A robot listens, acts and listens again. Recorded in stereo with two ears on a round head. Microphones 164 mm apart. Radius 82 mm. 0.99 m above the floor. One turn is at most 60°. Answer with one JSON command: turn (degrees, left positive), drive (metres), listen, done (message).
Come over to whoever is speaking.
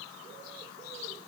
{"listen": true}
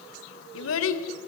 {"turn": 60}
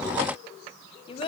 {"turn": 30}
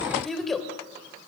{"drive": 1.0}
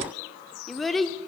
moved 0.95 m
{"drive": 1.0}
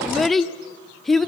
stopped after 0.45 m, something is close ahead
{"done": "Arrived at the child speaking, straight ahead."}